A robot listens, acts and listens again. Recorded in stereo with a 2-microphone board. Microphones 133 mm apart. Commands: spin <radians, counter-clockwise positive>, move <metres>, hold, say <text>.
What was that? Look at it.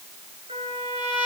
spin -0.87
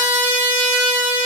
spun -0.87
spin -0.26
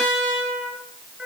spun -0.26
say Found it: a trumpet, straight ahead.